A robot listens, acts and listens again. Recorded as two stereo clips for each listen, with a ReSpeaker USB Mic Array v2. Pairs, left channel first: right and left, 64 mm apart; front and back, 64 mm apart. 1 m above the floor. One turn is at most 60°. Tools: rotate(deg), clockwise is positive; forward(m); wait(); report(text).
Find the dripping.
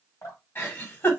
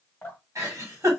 rotate(60)
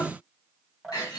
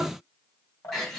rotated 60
report("Facing the dripping, 1 to 2 m away.")